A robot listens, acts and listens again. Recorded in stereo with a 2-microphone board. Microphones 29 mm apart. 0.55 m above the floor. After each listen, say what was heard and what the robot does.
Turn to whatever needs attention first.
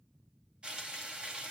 Keep listening.
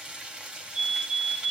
The fire alarm: about 55° right or 125° right. Turn 55° right.
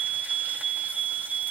So it is at 50° right. Turn 50° right.
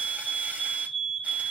The fire alarm is now 30° right. Turn 30° right.
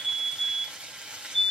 Found it: a fire alarm, straight ahead.